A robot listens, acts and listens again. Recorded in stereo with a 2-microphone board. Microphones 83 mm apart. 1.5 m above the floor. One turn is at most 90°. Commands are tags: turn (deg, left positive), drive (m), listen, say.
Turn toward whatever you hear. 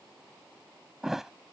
<turn deg="-30"/>
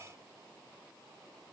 <listen/>
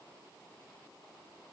<say>I heard a thud, but can't make it out now. It was about 25° left or 145° right.</say>